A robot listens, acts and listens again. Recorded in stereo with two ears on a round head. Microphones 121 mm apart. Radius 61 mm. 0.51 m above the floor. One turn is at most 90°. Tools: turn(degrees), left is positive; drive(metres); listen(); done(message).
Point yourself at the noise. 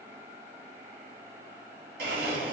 turn(degrees=-90)
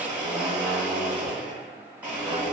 turn(degrees=-10)
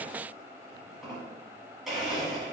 done("Found it: a blender, straight ahead.")